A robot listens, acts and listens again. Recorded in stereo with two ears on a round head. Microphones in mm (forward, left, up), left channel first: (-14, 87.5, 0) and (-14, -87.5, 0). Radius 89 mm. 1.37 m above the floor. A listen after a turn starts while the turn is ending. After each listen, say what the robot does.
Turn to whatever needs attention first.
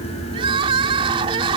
Turn 25° right.
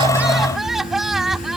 Found it: crying, straight ahead.